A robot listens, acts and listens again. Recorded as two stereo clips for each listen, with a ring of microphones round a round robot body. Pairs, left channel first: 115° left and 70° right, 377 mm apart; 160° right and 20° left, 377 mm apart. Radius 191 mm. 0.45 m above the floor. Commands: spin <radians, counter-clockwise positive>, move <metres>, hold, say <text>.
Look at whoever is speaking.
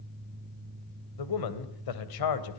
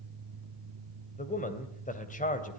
spin 2.36
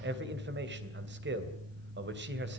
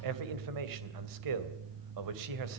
spin -0.17
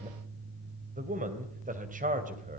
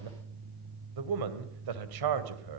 say Facing the man speaking.